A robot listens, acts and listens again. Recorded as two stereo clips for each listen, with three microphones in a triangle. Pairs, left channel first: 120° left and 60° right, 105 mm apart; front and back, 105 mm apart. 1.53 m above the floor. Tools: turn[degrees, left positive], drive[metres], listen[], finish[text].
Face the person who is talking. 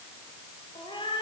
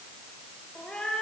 Action: listen[]
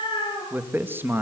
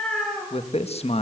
Thought: The man speaking: 10° left.
Action: turn[10]
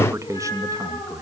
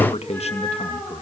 Action: finish[Facing the man speaking.]